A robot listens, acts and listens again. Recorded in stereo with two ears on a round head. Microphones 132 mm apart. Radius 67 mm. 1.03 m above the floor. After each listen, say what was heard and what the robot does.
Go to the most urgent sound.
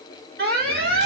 The alarm: about 65° right or 115° right. Turn 65° right.
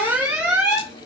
So it is at 10° right. Turn 10° right.
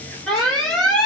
Drive 1.0 m forward.
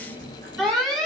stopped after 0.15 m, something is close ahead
Something is in my way. I am facing the alarm but have not reached it.